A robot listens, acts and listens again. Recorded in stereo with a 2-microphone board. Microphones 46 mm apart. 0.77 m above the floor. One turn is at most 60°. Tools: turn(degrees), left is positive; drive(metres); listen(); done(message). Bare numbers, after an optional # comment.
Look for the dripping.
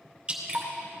# The dripping: about 20° right or 160° right.
turn(-20)
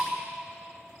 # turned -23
done("Facing the dripping.")